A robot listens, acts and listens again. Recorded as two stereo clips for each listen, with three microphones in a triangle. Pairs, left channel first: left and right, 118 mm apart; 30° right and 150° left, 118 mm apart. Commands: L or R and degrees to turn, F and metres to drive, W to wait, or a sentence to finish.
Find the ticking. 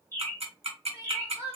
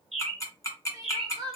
R90
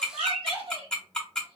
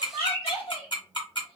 L10
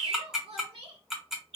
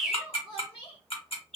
Facing the ticking.